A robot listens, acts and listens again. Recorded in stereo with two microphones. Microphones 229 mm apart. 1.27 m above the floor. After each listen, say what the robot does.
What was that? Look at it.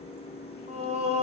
Turn 25° right.
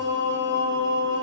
Turn 125° right.
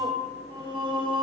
Turn 20° right.
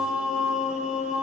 Found it: singing, straight ahead.